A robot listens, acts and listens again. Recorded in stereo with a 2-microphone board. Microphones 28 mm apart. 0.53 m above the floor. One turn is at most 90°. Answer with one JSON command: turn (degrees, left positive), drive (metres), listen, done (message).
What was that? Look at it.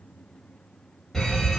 {"turn": 30}
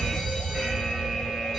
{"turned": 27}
{"turn": -15}
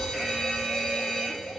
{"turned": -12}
{"done": "Found it: a fire alarm, straight ahead."}